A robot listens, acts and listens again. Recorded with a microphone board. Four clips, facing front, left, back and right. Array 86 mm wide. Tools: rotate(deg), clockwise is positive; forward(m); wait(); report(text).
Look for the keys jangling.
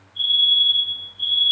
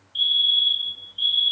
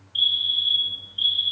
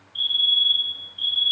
wait()
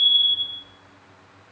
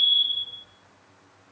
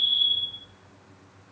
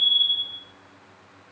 wait()
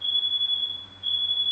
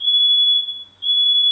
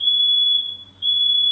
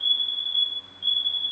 report("I can't make out keys jangling, only a fire alarm.")